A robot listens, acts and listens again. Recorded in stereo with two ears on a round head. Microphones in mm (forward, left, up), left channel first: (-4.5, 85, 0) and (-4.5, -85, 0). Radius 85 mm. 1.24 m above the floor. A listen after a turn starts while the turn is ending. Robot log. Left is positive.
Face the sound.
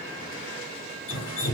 cmd yaw +90
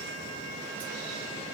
cmd idle
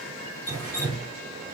note: The dripping is now 10° left.
cmd yaw +10
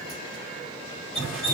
end: Found it: dripping, straight ahead.